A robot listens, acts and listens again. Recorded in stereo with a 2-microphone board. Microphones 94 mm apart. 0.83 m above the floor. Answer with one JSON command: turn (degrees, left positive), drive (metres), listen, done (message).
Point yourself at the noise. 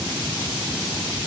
{"listen": true}
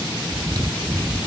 {"turn": -45}
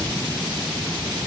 {"listen": true}
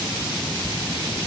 {"listen": true}
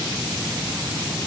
{"done": "I heard chewing, but can't make it out now. It was about straight ahead or 90° right."}